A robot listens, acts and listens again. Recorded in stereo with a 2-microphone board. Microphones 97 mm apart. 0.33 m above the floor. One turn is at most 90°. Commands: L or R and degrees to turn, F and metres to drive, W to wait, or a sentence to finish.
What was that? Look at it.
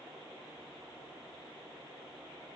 W
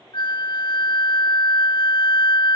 L60
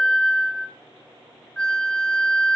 L10
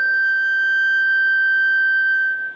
Found it: a flute, straight ahead.